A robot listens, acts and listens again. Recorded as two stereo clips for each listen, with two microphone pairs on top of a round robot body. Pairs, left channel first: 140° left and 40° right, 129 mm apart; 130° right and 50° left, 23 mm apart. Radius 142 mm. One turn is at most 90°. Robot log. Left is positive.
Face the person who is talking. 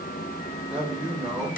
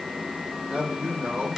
note: The man speaking: 40° left.
cmd yaw +40
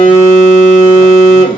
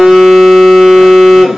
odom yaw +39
cmd idle
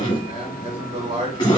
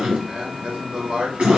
end: Found it: a man speaking, straight ahead, 2 to 4 m away.